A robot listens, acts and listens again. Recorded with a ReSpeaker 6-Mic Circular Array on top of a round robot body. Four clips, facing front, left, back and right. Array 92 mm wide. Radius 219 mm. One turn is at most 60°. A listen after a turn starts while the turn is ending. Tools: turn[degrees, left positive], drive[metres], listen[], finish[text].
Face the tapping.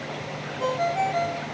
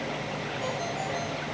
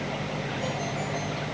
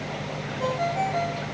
Action: listen[]
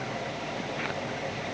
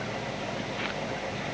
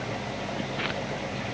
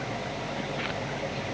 Action: listen[]
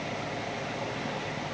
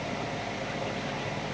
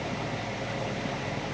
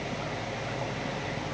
Action: finish[I can't make out tapping, only a ringtone.]